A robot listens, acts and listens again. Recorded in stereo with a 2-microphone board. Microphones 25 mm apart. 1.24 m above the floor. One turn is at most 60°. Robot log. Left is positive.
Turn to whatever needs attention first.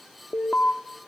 note: The alarm: about 65° left or 115° left.
cmd yaw +60
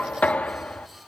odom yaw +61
cmd idle
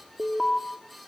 end: Facing the alarm.